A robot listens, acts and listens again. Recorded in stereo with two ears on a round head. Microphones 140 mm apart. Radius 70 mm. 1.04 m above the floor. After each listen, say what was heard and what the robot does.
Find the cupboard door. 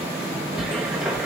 Turn 30° right.
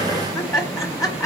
Keep listening.
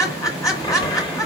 So it is at 25° left. Turn 25° left.
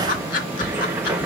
The cupboard door is now 15° right. Turn 15° right.
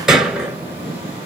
Found it: a cupboard door, straight ahead.